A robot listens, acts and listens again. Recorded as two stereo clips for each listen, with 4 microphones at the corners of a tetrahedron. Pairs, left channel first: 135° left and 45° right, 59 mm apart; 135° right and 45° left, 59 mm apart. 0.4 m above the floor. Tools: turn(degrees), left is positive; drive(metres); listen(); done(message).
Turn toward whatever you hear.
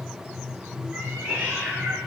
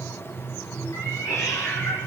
turn(degrees=-105)
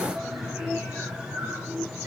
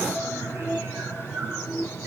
listen()
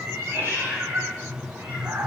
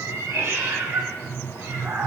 turn(degrees=10)
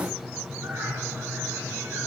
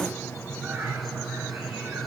listen()
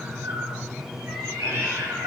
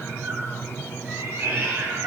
done("Found it: a cat meowing, straight ahead.")